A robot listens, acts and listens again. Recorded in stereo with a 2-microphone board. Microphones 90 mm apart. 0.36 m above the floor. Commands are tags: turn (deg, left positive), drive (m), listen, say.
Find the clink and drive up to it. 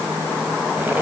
<listen/>
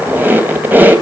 <listen/>
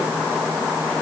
<say>I can't make out a clink, only a squeak.</say>